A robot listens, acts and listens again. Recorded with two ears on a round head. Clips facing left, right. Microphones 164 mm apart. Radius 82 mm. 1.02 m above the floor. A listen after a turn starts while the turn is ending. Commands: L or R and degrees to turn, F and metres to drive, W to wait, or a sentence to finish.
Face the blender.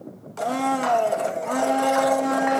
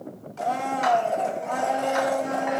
L65
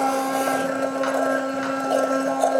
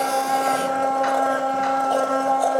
L25
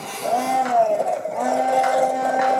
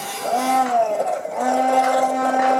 Facing the blender, 1 to 2 m away.